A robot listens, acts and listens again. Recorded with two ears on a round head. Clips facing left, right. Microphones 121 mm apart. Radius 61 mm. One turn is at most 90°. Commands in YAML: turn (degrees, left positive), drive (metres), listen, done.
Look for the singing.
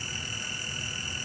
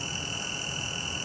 listen: true
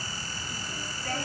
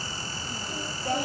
turn: -30
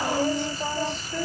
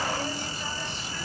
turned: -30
turn: 35
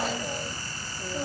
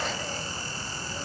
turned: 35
turn: 25
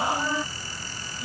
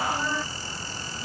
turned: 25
turn: 10
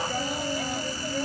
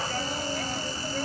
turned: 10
done: "Found it: singing, straight ahead."